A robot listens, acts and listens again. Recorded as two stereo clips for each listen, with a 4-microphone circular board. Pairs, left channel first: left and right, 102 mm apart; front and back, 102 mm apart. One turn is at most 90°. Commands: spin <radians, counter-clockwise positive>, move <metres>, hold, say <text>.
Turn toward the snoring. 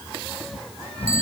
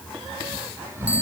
spin 1.57
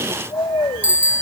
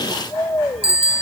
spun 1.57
spin 0.96
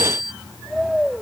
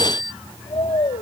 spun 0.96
say Found it: snoring, straight ahead.